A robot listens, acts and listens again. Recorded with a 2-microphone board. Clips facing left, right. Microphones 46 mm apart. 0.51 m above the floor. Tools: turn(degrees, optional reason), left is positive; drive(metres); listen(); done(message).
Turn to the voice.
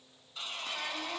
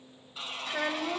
turn(degrees=-50, reason="The child speaking: about 50° right or 130° right.")
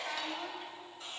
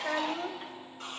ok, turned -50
turn(degrees=-75, reason="So it is at 75° right.")
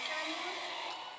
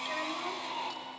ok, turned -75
listen()
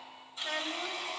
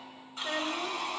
turn(degrees=-15, reason="The child speaking is now 15° right.")
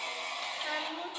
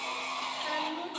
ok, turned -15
done("Found it: a child speaking, straight ahead.")